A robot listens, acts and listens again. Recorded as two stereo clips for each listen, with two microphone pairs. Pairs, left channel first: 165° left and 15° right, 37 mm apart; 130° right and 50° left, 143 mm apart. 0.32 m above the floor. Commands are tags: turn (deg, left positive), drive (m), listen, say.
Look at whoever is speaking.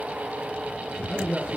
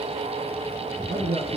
<turn deg="55"/>
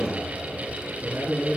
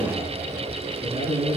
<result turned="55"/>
<say>Facing the man speaking.</say>